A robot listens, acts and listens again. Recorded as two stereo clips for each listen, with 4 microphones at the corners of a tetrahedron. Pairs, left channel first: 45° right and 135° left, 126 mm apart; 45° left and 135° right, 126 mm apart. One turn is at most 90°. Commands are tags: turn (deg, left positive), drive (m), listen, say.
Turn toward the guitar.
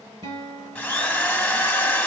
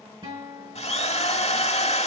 <turn deg="90"/>
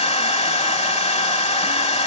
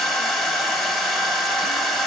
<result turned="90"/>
<turn deg="90"/>
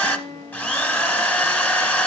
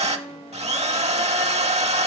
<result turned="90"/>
<turn deg="30"/>
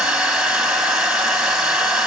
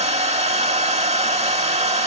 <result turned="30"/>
<listen/>
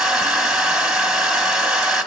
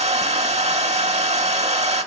<listen/>
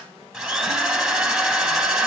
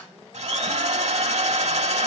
<say>I heard a guitar from this way, but can't make it out now.</say>